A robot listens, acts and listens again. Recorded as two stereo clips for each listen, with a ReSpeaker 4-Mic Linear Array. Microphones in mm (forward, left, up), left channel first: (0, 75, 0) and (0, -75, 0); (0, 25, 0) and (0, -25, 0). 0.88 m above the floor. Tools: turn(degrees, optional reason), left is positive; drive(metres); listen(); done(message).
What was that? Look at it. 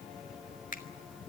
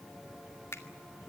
turn(degrees=65, reason="The finger snap: about 65° left or 115° left.")
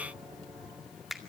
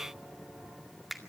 done("Facing the finger snap.")